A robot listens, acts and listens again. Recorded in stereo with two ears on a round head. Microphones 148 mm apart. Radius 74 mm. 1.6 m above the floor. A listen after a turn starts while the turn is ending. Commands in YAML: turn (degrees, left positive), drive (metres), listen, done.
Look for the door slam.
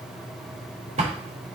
turn: -40
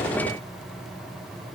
listen: true
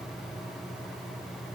done: "I heard a door slam, but can't make it out now. It was about straight ahead or 100° right."